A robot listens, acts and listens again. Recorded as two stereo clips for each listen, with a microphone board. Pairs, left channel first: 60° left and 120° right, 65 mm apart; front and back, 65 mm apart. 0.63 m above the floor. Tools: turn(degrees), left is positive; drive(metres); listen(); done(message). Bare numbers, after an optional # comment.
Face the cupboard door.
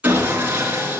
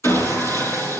listen()
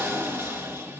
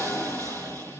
listen()
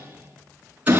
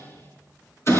done("I can't make out a cupboard door, only sawing.")